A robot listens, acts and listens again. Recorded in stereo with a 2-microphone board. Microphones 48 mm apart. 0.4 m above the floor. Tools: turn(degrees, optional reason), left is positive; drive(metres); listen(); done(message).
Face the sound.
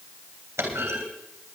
turn(degrees=-90)
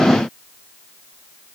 done("I heard a clunk from this way, but can't make it out now.")